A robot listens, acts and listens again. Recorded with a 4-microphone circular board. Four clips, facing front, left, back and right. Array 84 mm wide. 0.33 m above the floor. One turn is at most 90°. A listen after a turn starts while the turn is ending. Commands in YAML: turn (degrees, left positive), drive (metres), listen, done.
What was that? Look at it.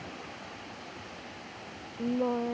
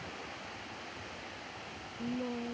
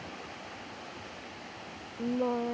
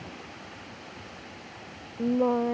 turn: -90
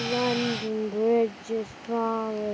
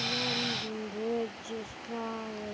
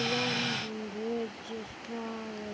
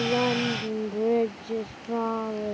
turn: -30
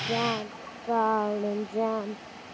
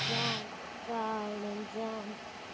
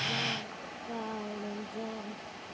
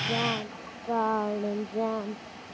turn: -25
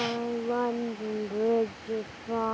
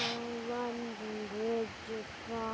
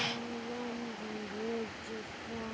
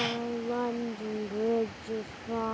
turn: -15
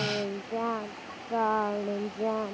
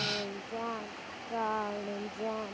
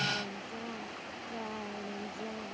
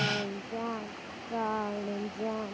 done: "Found it: singing, straight ahead."